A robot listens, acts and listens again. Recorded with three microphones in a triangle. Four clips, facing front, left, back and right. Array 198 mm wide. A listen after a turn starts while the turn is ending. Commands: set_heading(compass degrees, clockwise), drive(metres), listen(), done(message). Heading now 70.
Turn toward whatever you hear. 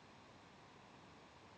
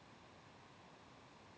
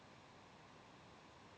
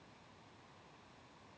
listen()
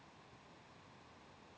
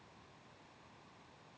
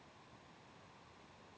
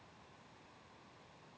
listen()
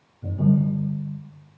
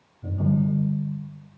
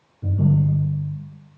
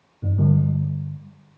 set_heading(185)
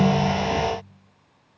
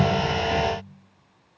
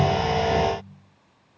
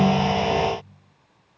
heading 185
listen()
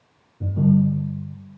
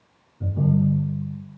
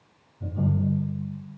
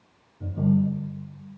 done("Found it: a ringtone, straight ahead.")